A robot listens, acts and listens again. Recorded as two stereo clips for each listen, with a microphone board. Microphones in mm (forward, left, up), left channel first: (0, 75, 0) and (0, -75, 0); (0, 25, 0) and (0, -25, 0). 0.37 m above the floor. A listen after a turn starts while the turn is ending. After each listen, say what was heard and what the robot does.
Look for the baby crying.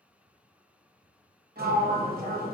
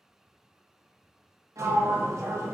Keep listening.
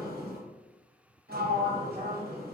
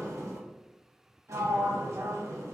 Keep listening.
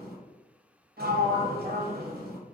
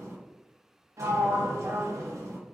I can't make out a baby crying to turn to.